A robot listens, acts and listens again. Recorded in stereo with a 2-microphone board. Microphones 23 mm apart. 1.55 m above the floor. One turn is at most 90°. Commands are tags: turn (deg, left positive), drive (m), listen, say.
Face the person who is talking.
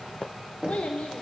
<turn deg="60"/>
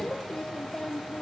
<turn deg="35"/>
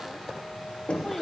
<listen/>
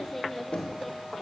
<say>Found it: a child speaking, straight ahead, under 1 m away.</say>